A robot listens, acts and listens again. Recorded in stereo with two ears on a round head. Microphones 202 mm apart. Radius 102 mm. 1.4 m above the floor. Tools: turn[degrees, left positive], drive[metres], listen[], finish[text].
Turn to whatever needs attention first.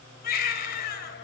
Thought: The baby crying: about 45° left or 135° left.
Action: turn[45]
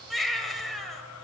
Action: finish[Facing the baby crying.]